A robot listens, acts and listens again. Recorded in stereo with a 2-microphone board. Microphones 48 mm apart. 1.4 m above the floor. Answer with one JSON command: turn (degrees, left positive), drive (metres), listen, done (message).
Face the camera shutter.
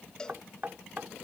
{"listen": true}
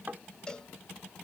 {"listen": true}
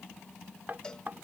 {"done": "I can't make out a camera shutter to turn to."}